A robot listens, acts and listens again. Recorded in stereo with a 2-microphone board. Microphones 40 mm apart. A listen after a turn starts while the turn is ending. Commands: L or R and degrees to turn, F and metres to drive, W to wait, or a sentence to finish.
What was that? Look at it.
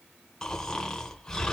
L30
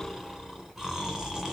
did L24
R10
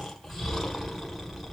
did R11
Facing the snoring, 1 to 2 m away.